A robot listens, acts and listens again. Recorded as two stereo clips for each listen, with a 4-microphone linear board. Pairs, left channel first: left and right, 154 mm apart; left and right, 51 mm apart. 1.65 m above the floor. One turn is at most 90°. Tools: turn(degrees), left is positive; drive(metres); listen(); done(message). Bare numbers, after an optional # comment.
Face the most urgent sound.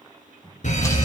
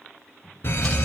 # The fire alarm: about 55° left or 125° left.
turn(55)
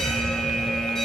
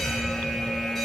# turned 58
done("Found it: a fire alarm, straight ahead, 1 to 2 m away.")